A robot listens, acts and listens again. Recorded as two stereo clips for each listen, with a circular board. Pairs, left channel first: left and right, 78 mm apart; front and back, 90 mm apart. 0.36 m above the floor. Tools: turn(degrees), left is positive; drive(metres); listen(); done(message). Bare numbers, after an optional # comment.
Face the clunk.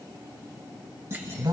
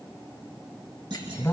# The clunk: 145° right.
turn(-145)
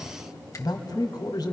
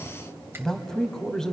done("Facing where the clunk came from. I can't hear it now.")